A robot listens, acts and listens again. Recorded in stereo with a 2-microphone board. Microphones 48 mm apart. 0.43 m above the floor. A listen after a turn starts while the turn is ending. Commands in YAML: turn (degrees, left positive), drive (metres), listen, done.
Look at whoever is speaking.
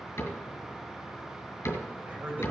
turn: -40
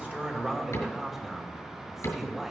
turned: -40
turn: -10
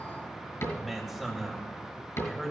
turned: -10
done: "Found it: a man speaking, straight ahead, 2 to 4 m away."